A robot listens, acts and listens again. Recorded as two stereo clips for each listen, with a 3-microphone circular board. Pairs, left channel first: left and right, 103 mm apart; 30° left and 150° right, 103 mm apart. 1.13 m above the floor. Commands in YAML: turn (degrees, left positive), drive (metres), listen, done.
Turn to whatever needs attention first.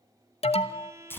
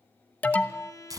turn: 105
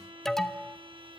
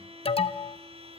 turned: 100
done: "Found it: an alarm, straight ahead."